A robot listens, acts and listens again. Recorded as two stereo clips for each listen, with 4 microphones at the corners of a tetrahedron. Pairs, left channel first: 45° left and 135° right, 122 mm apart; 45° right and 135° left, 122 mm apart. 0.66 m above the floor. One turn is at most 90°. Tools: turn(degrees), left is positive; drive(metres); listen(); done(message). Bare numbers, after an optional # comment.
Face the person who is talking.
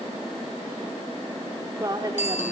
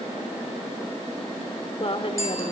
# The woman speaking: 80° right.
turn(-80)
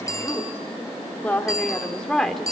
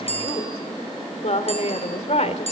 # The woman speaking is now 45° right.
turn(-45)
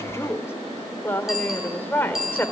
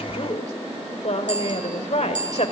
# The woman speaking is now 30° right.
turn(-30)
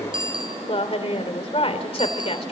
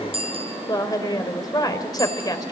# The woman speaking is now 10° left.
turn(10)
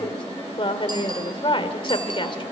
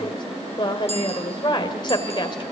done("Found it: a woman speaking, straight ahead.")